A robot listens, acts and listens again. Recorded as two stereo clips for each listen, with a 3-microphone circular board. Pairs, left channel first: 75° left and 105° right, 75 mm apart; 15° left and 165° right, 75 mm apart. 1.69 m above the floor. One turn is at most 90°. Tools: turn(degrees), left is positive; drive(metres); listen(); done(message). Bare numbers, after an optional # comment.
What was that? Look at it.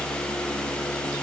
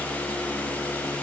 listen()
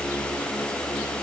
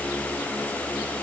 listen()
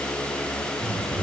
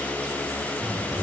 # The bird: 160° right.
turn(-90)
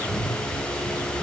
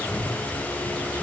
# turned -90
# The bird is now 105° right.
turn(-90)
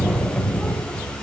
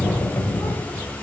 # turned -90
# The bird is now 10° right.
turn(-10)
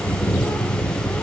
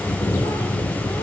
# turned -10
done("Found it: a bird, straight ahead, 2 to 4 m away.")